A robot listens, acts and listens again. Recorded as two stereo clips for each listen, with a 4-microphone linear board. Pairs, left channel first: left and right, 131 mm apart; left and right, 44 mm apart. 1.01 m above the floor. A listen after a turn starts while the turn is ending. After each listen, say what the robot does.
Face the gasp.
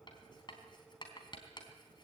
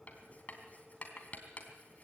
Keep listening.
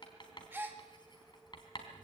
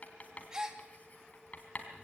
Turn 15° right.
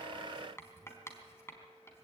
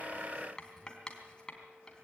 Keep listening.
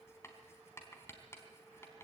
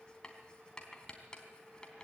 I heard a gasp, but can't make it out now. It was about straight ahead or 150° right.